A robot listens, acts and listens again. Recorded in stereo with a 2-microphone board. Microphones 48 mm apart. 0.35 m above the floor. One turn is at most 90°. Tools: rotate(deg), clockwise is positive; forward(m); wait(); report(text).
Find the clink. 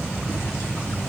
wait()
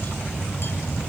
wait()
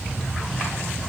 report("I can't make out a clink.")